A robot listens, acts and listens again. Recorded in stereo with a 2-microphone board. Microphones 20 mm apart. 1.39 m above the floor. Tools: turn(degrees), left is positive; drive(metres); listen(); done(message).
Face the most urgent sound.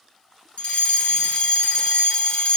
turn(degrees=70)
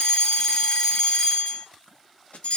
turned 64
turn(degrees=40)
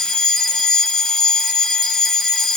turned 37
done("Found it: a fire alarm, straight ahead.")